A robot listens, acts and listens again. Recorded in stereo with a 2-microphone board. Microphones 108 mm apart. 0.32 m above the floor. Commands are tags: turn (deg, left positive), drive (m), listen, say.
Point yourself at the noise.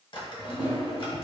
<turn deg="50"/>
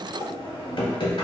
<turn deg="65"/>
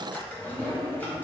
<turn deg="20"/>
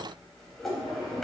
<say>Found it: a drawer, straight ahead.</say>